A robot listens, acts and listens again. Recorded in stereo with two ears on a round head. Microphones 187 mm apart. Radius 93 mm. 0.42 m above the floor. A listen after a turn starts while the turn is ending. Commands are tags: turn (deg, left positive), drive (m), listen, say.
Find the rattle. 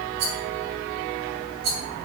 <turn deg="-65"/>
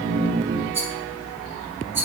<turn deg="-15"/>
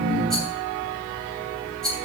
<say>Found it: a rattle, straight ahead, 2 to 4 m away.</say>